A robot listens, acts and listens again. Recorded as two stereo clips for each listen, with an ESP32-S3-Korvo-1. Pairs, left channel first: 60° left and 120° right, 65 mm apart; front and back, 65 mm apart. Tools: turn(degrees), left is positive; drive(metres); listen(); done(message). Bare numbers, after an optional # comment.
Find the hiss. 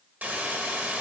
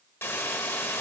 # The hiss: 55° right.
turn(-55)
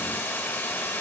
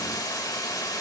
done("Facing the hiss, 1 to 2 m away.")